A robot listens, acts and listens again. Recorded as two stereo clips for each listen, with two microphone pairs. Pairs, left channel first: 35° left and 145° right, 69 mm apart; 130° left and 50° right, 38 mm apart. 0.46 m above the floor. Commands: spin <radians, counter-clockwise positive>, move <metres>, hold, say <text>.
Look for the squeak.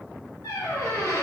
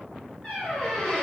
spin 0.96
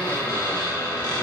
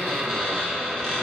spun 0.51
spin 0.44
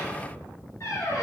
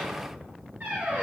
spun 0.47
say Facing the squeak, 1 to 2 m away.